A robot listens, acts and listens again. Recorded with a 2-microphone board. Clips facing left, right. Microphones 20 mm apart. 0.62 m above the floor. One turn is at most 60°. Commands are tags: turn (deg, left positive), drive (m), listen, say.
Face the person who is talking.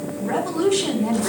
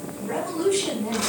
<turn deg="30"/>
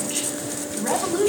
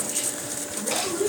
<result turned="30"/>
<turn deg="60"/>
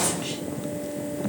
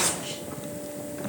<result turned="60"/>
<turn deg="60"/>
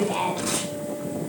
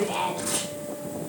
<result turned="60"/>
<say>Facing the woman speaking.</say>